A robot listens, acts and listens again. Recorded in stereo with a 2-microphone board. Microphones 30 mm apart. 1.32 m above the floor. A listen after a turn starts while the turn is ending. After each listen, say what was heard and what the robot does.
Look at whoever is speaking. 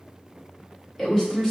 Turn 30° left.
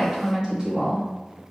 So it is at 25° right. Turn 25° right.
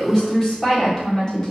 The woman speaking is now 20° left. Turn 20° left.
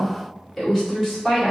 Found it: a woman speaking, straight ahead.